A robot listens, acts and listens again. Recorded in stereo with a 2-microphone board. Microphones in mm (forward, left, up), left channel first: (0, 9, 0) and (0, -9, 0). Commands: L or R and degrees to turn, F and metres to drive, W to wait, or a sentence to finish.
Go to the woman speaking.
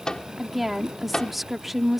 R30
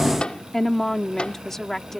L25
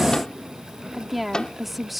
F1.0
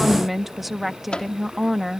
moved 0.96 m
F1.0
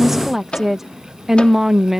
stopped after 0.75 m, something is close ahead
R15
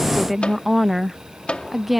I am next to the woman speaking.